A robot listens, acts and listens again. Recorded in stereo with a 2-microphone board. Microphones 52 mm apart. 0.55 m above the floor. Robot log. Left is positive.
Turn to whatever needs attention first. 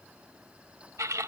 cmd idle
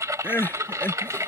note: The crying: about 45° left or 135° left.
cmd yaw +45
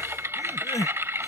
note: So it is at 90° left.
cmd yaw +90
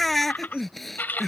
end: Found it: crying, straight ahead.